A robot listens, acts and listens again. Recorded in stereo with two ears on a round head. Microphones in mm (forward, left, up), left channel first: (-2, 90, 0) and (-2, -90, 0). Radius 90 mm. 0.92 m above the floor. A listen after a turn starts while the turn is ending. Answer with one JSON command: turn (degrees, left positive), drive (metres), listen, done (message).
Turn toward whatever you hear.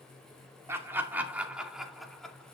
{"turn": 30}
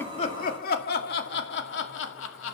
{"turn": 110}
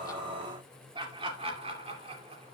{"turn": -30}
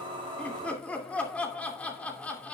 {"done": "Found it: laughter, straight ahead, 2 to 4 m away."}